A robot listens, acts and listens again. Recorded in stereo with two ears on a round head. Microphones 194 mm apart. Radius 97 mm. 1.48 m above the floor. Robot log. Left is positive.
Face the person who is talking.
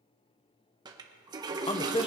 note: The man speaking: about 25° left or 155° left.
cmd yaw +25
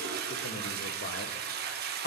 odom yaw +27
note: So it is at 125° left.
cmd yaw +125
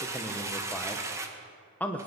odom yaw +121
end: Found it: a man speaking, straight ahead, 1 to 2 m away.